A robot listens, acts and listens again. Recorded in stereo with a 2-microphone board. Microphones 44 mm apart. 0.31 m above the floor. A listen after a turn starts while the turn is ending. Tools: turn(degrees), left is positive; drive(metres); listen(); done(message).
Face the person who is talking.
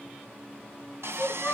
turn(degrees=60)
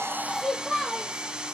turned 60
done("Found it: a child speaking, straight ahead, over 4 m away.")